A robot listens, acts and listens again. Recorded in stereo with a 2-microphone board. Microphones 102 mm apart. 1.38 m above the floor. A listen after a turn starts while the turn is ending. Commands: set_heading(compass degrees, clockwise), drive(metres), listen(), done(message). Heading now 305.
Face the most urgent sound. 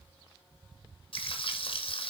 listen()
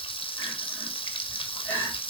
set_heading(285)
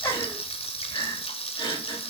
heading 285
set_heading(150)
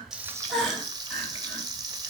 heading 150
done("Found it: crying, straight ahead, 2 to 4 m away.")